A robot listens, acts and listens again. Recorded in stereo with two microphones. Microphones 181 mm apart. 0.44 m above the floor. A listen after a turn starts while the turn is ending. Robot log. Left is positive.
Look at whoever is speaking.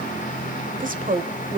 note: The woman speaking: about 50° right or 130° right.
cmd yaw -50
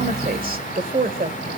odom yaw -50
note: So it is at 70° right.
cmd yaw -70
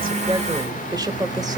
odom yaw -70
note: The woman speaking is now 25° right.
cmd yaw -25
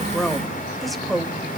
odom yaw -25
end: Found it: a woman speaking, straight ahead, 1 to 2 m away.